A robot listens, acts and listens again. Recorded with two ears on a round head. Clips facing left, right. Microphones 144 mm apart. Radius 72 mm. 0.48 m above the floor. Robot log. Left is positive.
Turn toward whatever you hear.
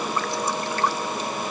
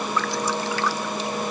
note: The dripping: about 65° right or 115° right.
cmd yaw -65
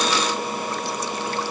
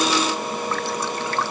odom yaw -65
note: So it is at 50° right.
cmd yaw -50
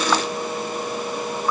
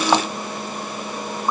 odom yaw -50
note: The dripping is now 20° right.
cmd yaw -20
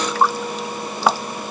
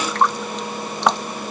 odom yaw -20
end: Found it: dripping, straight ahead.